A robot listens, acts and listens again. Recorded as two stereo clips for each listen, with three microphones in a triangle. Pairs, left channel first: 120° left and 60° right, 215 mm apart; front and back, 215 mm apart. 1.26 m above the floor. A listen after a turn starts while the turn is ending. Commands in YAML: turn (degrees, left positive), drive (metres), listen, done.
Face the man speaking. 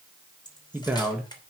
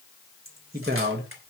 turn: -150
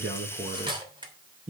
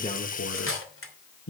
turn: -10
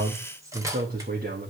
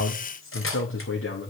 turn: -20
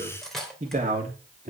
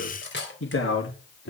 turn: -15
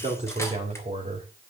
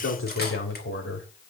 done: "Found it: a man speaking, straight ahead."